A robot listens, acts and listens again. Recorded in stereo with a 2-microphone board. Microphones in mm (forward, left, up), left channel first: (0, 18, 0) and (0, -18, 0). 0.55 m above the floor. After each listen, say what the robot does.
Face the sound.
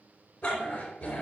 Turn 30° left.
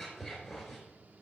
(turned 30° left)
Facing the dog barking, 2 to 4 m away.